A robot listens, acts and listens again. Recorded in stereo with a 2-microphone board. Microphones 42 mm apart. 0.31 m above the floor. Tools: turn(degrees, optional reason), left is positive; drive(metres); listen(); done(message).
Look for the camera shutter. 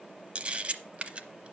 turn(degrees=-30, reason="The camera shutter: about 30° right or 150° right.")
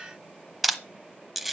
done("Facing the camera shutter.")